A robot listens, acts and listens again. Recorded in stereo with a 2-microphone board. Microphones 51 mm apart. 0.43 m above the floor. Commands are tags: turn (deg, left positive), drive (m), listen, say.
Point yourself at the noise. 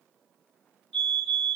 <turn deg="20"/>
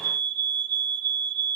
<turn deg="135"/>
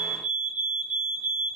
<turn deg="-20"/>
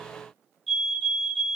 <say>Found it: a fire alarm, straight ahead.</say>